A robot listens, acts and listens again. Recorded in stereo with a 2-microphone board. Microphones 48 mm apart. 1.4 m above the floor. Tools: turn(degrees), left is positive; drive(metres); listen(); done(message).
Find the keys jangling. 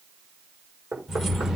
turn(degrees=-30)
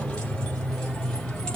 turn(degrees=15)
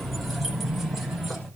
done("Found it: keys jangling, straight ahead.")